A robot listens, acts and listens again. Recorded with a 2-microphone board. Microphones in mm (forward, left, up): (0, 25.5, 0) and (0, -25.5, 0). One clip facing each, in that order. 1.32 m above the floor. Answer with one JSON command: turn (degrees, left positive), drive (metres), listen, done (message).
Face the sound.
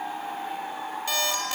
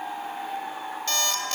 {"turn": 30}
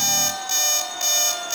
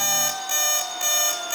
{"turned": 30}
{"turn": -20}
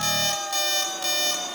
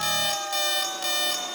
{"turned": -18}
{"done": "Facing the alarm clock."}